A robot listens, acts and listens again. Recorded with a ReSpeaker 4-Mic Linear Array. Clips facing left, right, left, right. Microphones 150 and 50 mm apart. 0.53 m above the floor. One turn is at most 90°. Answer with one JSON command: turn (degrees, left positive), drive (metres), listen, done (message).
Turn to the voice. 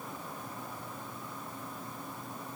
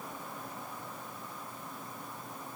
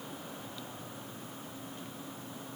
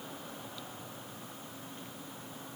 {"listen": true}
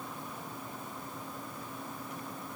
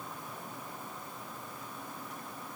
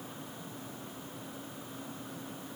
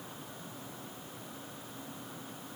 {"listen": true}
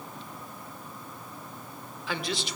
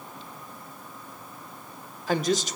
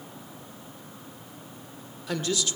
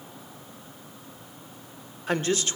{"turn": -45}
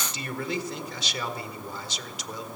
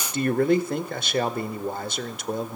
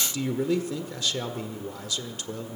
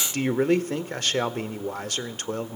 {"turn": -80}
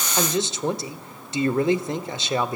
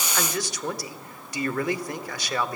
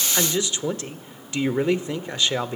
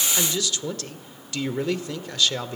{"turn": 30}
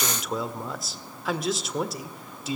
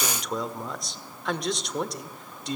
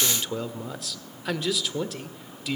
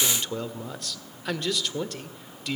{"done": "Facing the man speaking."}